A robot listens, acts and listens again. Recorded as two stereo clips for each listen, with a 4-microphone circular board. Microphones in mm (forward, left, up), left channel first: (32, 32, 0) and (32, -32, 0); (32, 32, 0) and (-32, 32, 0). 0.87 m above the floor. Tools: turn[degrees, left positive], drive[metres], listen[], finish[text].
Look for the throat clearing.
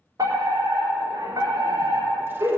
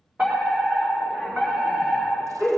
Action: listen[]
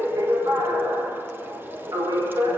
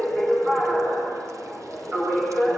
Action: listen[]
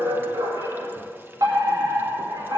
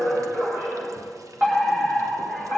Action: finish[I can't make out throat clearing, only a fire alarm.]